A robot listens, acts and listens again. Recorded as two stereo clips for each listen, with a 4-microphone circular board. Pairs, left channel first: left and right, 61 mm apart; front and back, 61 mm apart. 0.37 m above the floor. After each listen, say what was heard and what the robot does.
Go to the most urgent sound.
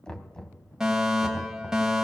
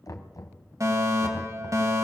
The fire alarm: 170° right. Turn 170° right.
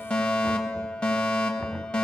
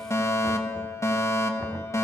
The fire alarm is now 20° left. Turn 20° left.
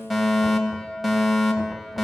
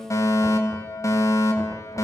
Drive 1.0 m forward.
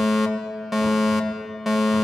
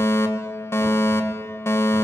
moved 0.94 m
Drive 1.0 m forward.
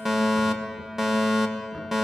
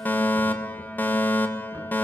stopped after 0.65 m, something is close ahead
The fire alarm is now 15° right. Turn 15° right.
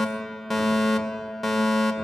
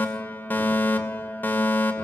Arrived at the fire alarm, straight ahead.